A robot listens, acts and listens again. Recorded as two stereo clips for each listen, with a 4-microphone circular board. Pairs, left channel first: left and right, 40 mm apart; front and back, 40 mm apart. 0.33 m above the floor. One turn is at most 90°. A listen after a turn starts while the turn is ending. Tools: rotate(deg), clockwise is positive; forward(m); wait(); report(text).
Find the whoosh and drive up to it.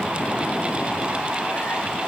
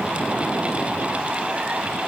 wait()
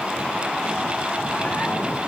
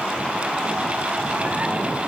wait()
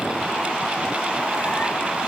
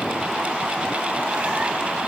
report("I can't make out a whoosh to turn to.")